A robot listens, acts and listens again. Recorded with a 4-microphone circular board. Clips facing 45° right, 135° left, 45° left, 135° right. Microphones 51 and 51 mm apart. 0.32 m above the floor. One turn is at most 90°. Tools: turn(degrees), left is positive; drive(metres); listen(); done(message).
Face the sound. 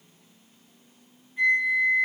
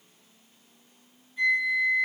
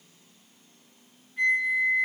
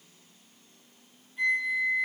turn(degrees=15)
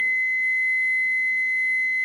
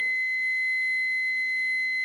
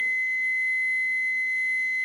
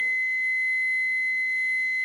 done("Found it: a flute, straight ahead, 2 to 4 m away.")